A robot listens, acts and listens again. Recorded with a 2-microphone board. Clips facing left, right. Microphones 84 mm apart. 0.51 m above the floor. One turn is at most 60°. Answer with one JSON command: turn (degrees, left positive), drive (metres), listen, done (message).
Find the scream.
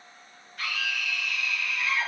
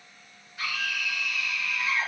{"turn": -30}
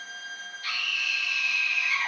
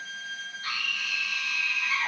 {"turn": -60}
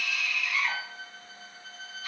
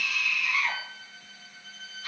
{"turn": -60}
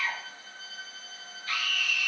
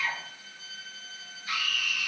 {"turn": -15}
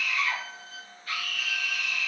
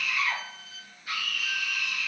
{"turn": -10}
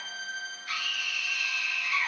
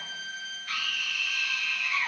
{"done": "Found it: a scream, straight ahead, 1 to 2 m away."}